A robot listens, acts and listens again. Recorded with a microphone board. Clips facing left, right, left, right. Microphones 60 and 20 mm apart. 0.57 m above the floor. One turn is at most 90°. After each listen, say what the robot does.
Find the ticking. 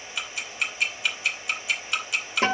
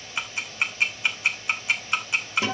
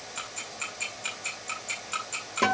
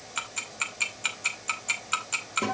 Turn 30° right.
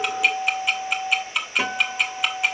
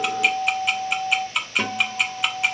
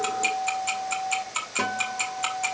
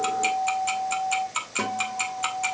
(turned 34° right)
Facing the ticking, 2 to 4 m away.